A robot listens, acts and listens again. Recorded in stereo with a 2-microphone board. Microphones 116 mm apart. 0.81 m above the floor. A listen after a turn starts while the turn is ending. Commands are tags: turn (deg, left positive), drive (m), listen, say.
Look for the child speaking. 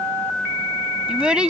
<turn deg="-30"/>
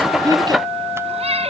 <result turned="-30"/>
<listen/>
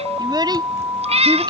<turn deg="-145"/>
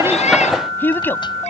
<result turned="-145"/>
<turn deg="15"/>
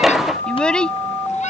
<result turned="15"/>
<say>Found it: a child speaking, straight ahead.</say>